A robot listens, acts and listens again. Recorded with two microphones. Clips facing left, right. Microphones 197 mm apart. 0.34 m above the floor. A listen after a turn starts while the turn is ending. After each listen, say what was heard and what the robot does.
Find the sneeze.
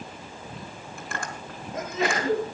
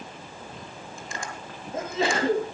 The sneeze: about 30° right or 150° right. Turn 30° right.
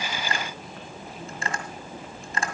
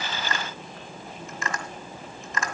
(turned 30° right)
Keep listening.
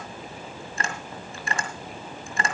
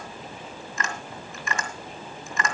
I heard a sneeze, but can't make it out now. It was about straight ahead or 120° right.